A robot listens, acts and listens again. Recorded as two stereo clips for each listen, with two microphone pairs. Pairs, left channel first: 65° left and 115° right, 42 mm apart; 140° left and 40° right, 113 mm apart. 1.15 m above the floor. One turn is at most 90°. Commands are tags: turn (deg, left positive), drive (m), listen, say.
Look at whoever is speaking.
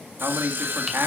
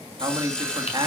<turn deg="-90"/>
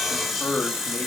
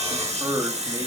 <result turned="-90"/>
<turn deg="10"/>
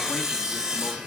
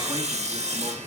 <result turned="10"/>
<listen/>
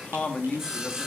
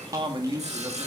<say>Found it: a man speaking, straight ahead.</say>